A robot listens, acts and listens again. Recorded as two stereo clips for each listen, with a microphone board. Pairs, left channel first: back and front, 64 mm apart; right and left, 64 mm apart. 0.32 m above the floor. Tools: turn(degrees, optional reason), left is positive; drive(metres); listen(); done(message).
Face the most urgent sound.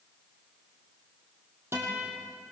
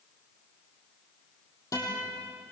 listen()
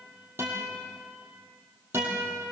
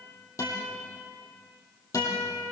listen()
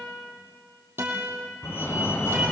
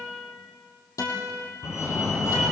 turn(degrees=-130, reason="The fire alarm: 130° right.")
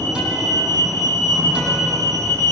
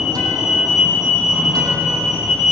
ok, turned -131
done("Facing the fire alarm.")